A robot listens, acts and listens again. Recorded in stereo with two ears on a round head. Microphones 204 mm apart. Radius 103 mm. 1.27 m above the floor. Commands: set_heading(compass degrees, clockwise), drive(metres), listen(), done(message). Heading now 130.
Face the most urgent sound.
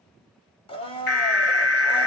set_heading(80)
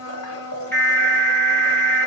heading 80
set_heading(70)
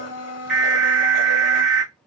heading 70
done("Found it: an alarm, straight ahead.")